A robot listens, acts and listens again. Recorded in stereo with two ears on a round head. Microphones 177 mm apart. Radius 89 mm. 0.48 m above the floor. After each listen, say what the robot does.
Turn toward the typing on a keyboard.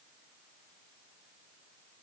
Keep listening.
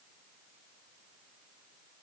Keep listening.
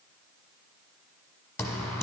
Turn 30° left.
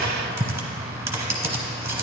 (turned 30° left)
Turn 15° right.
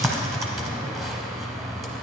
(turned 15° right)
Facing the typing on a keyboard, 1 to 2 m away.